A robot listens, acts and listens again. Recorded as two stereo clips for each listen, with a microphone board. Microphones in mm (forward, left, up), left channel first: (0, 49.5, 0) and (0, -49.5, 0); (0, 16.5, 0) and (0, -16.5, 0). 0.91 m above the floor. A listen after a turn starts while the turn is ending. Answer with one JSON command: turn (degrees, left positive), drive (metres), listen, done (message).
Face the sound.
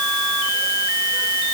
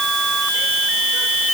{"listen": true}
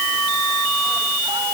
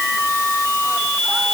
{"listen": true}
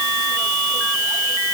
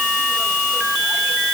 {"done": "I can't make out anything to turn to."}